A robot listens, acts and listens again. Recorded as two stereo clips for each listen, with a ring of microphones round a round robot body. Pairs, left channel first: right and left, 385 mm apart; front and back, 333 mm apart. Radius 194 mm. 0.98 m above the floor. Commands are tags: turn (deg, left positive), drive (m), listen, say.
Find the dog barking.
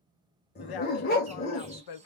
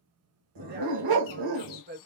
<turn deg="-155"/>
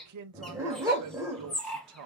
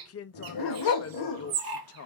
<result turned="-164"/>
<say>Facing the dog barking.</say>